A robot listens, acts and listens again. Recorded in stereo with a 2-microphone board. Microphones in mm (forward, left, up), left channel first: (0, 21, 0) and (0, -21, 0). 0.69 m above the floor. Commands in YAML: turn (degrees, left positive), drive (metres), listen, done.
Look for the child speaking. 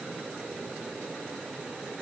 listen: true
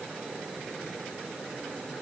listen: true
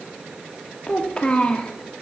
turn: 25
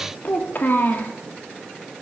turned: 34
turn: 120
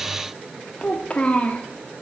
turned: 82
turn: 40
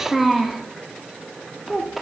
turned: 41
done: "Facing the child speaking."